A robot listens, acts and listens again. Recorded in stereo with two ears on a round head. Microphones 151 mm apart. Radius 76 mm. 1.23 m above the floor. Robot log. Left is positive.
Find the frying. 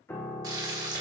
note: The frying: about 25° right or 155° right.
cmd yaw -25
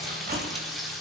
end: Facing the frying, 1 to 2 m away.